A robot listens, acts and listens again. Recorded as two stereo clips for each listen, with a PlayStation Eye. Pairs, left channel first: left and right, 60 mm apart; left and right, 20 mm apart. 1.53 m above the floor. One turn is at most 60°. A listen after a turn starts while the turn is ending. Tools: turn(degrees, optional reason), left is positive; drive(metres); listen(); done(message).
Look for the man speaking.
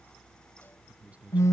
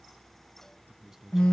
turn(degrees=-25, reason="The man speaking: about 25° right or 155° right.")
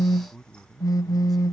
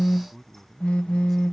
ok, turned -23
done("Found it: a man speaking, straight ahead.")